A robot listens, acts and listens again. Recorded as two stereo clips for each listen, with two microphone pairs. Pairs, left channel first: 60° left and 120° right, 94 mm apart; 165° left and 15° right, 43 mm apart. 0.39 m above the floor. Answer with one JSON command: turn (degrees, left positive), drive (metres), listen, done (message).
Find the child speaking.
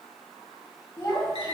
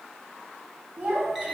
{"turn": 25}
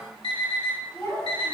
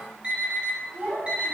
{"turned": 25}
{"done": "Facing the child speaking."}